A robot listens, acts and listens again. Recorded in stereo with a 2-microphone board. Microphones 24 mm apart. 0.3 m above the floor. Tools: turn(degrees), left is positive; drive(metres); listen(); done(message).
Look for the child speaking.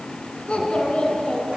turn(degrees=55)
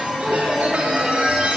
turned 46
turn(degrees=15)
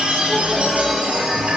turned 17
listen()
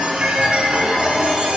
listen()
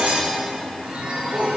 turn(degrees=15)
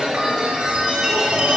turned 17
listen()
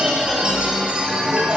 listen()
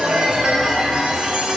done("I heard a child speaking from this way, but can't make it out now.")